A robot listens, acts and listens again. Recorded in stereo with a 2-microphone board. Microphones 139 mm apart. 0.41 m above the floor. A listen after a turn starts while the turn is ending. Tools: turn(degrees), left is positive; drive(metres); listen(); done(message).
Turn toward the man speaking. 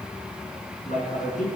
turn(degrees=90)
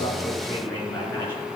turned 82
turn(degrees=15)
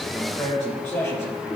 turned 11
done("Facing the man speaking, over 4 m away.")